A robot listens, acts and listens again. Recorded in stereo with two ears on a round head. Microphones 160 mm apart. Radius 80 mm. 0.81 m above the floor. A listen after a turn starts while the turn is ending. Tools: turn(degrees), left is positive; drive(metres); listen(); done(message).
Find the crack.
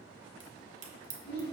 turn(degrees=-65)
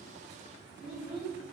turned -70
listen()
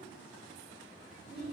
done("I heard a crack, but can't make it out now. It was about 5° left or 45° right.")